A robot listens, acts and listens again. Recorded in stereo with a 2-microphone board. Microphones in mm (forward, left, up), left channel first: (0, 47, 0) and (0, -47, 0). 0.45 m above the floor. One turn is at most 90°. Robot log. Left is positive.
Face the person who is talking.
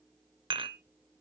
cmd idle
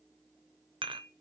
cmd idle
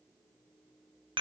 end: I can't make out anyone speaking to turn to.